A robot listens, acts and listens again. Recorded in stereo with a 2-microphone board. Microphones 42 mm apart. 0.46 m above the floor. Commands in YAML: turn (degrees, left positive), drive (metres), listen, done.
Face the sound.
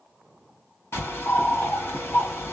turn: 90
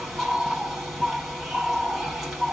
done: "Found it: a bird, straight ahead."